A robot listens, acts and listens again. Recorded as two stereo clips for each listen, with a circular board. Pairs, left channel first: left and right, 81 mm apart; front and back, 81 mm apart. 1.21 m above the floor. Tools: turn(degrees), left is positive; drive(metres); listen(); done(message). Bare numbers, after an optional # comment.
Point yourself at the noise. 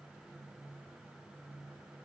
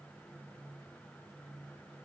listen()
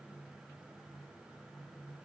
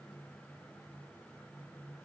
listen()
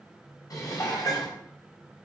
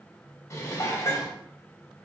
# The dishes clattering: 50° left.
turn(50)
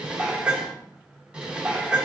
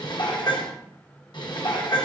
# The dishes clattering is now 10° right.
turn(-10)
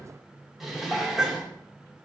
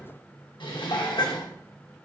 done("Facing the dishes clattering, under 1 m away.")